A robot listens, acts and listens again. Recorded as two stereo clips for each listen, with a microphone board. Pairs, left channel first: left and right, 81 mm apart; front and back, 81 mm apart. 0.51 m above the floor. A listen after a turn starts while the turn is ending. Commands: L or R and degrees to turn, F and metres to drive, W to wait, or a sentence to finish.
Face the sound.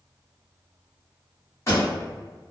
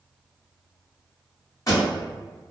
L40
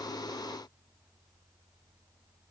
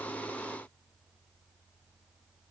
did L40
I heard a pop from this way, but can't make it out now.